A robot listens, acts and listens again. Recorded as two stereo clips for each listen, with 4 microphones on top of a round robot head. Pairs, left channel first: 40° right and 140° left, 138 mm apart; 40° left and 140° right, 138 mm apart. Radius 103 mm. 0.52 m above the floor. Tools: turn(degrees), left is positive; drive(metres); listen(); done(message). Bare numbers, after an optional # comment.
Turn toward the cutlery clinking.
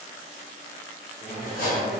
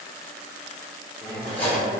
# The cutlery clinking: 35° right.
turn(-35)
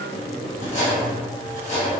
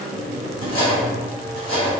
done("Facing the cutlery clinking, 1 to 2 m away.")